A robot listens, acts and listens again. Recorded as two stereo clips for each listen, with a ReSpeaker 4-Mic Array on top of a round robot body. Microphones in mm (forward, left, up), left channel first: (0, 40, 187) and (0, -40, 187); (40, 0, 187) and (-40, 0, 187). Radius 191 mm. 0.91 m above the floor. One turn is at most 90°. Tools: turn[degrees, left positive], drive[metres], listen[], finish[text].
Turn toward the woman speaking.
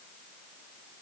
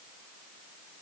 Action: listen[]
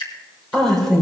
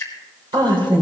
Thought: The woman speaking: 175° left.
Action: turn[90]
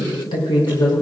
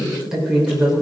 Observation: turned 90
Thought: The woman speaking is now 100° left.
Action: turn[90]
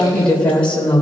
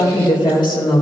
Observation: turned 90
Thought: The woman speaking is now 15° left.
Action: turn[15]
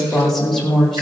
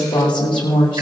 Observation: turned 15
Action: finish[Found it: a woman speaking, straight ahead, over 4 m away.]